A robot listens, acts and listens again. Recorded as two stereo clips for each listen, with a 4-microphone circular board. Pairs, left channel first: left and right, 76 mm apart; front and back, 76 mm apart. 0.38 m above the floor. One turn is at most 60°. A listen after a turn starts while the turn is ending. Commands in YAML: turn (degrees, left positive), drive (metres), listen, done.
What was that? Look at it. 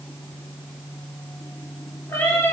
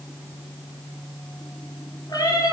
turn: 35
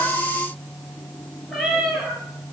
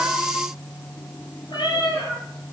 done: "Facing the cat meowing, 2 to 4 m away."